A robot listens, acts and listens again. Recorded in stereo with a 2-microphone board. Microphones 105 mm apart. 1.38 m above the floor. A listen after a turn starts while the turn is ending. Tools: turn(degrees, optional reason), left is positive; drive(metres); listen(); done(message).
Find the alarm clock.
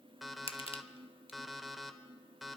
turn(degrees=30)
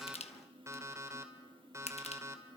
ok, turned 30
turn(degrees=-30, reason="So it is at 30° right.")
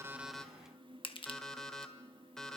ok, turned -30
done("Facing the alarm clock, 1 to 2 m away.")